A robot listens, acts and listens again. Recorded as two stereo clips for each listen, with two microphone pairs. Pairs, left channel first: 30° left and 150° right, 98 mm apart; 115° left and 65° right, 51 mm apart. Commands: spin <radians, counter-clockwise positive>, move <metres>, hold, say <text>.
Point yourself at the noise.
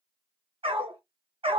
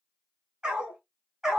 spin -2.44
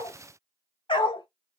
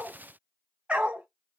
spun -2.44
say Found it: a dog barking, straight ahead, 1 to 2 m away.